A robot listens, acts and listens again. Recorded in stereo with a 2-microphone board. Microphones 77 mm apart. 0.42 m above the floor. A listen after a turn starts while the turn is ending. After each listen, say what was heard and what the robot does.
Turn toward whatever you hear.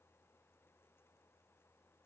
Keep listening.
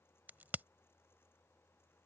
The crack: about 25° right or 155° right. Turn 25° right.
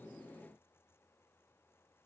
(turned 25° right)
Keep listening.
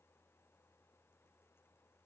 I heard a crack, but can't make it out now. It was about straight ahead or 130° right.